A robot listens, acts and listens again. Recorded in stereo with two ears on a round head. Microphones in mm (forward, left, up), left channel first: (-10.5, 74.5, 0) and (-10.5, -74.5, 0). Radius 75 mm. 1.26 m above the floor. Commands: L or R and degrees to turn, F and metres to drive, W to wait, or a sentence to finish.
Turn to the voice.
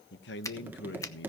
L90
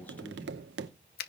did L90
W
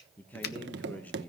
L10
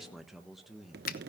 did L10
Found it: a man speaking, straight ahead.